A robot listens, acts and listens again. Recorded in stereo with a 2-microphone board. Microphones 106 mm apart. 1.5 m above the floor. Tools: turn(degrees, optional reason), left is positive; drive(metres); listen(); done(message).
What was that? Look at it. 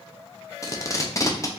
turn(degrees=30, reason="The tape being pulled: about 30° left or 150° left.")
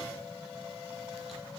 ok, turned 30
listen()
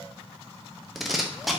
done("Facing the tape being pulled.")